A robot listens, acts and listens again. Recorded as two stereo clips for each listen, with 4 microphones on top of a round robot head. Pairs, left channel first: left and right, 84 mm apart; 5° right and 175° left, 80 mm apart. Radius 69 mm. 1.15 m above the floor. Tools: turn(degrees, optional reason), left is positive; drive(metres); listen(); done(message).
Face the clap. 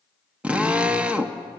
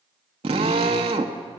listen()
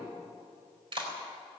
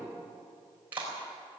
turn(degrees=-110, reason="The clap: 110° right.")
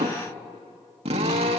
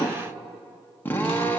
listen()
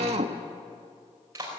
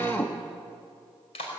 turn(degrees=-25, reason="The clap is now 25° right.")
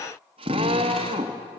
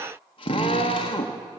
listen()
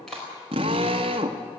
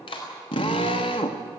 done("Facing the clap, over 4 m away.")